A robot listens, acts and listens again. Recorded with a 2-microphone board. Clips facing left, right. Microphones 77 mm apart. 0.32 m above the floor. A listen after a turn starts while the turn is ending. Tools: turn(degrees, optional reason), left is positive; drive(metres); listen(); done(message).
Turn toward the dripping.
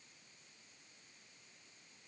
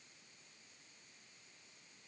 listen()
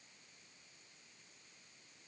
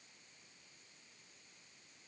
listen()
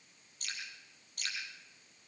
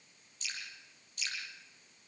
turn(degrees=50, reason="The dripping: about 50° left or 130° left.")
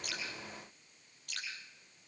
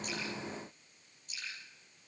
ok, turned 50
turn(degrees=80, reason="So it is at 80° left.")
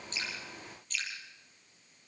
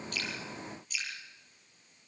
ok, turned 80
done("Facing the dripping.")